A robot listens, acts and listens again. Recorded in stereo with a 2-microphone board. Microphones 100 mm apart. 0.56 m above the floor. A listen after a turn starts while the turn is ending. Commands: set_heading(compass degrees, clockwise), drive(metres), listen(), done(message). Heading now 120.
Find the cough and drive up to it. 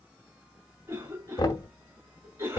set_heading(150)
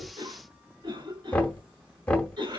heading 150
set_heading(265)
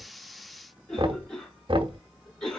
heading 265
set_heading(255)
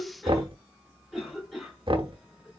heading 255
drive(1.0)
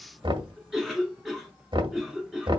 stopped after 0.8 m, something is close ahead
done("I am next to the cough.")